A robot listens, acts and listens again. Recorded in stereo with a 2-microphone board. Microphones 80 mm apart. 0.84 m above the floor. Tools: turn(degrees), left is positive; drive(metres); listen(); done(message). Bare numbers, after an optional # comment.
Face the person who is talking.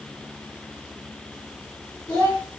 # The child speaking: about 60° left or 120° left.
turn(60)
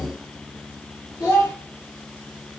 # So it is at 55° left.
turn(55)
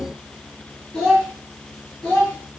# The child speaking is now 10° left.
turn(10)
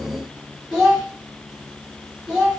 done("Facing the child speaking.")